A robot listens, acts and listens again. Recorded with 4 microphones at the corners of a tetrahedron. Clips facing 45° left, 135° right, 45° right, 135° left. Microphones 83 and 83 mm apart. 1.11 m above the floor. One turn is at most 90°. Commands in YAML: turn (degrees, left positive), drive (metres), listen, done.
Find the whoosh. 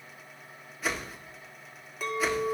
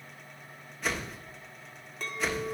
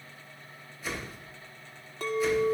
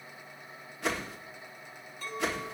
turn: 90
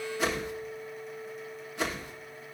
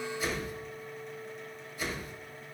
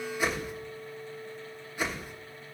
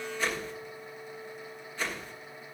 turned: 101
turn: 30
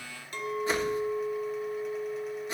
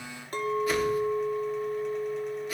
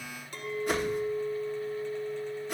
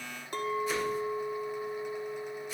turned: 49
turn: -15
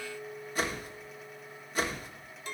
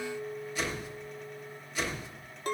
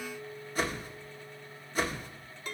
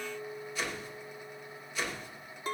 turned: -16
done: "Facing the whoosh."